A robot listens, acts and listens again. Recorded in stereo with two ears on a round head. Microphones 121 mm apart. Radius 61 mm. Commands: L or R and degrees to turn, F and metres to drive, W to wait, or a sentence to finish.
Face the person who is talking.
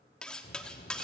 L90
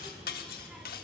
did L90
Found it: a child speaking, straight ahead.